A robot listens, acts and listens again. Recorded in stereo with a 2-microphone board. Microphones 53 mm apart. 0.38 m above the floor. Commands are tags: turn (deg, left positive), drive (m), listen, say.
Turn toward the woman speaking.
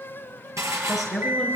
<turn deg="30"/>
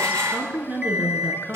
<turn deg="-35"/>
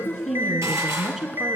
<turn deg="-10"/>
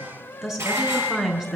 <turn deg="-10"/>
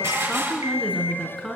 <say>Facing the woman speaking.</say>